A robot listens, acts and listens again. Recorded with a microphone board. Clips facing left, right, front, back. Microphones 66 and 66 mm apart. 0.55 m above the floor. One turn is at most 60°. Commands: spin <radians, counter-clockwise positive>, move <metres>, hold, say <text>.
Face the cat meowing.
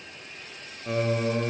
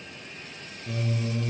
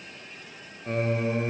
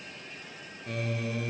hold
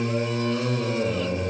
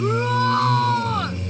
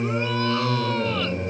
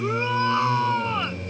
hold
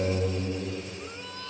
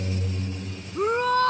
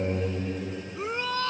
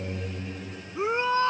say I can't make out a cat meowing to turn to.